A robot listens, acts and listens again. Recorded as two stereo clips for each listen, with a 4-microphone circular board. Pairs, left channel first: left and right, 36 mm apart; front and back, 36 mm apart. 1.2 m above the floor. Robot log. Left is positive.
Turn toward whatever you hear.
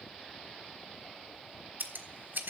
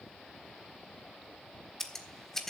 note: The scissors: 80° right.
cmd yaw -80
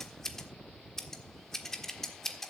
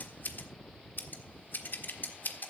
note: The scissors is now 15° left.
cmd yaw +15
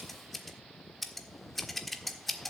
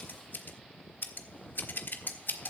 end: Found it: scissors, straight ahead, 1 to 2 m away.